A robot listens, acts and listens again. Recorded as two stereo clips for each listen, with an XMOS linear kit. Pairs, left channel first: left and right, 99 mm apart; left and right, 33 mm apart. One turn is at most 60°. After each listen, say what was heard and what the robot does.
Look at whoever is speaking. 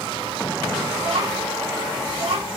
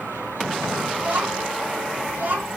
Turn 60° right.
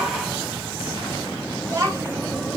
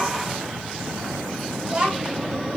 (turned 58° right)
So it is at 35° right. Turn 35° right.
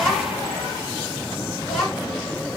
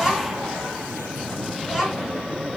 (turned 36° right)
Facing the child speaking, 2 to 4 m away.